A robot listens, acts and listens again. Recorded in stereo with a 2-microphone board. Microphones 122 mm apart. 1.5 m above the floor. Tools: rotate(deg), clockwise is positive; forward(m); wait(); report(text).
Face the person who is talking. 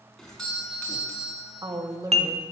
rotate(30)
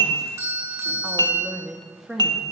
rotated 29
report("Facing the woman speaking.")